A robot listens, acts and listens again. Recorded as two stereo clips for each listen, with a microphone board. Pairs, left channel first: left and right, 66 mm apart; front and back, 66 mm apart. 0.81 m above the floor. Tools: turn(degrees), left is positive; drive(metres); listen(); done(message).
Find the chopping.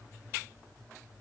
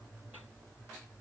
listen()
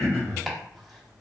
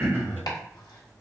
done("Facing the chopping, 1 to 2 m away.")